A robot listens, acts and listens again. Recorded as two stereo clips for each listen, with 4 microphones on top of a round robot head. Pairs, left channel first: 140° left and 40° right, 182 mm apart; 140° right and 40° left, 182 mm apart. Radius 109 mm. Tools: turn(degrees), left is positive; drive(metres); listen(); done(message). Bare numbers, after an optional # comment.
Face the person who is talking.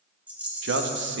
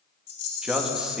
# The man speaking: 45° right.
turn(-45)
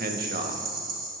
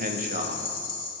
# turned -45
done("Found it: a man speaking, straight ahead, 1 to 2 m away.")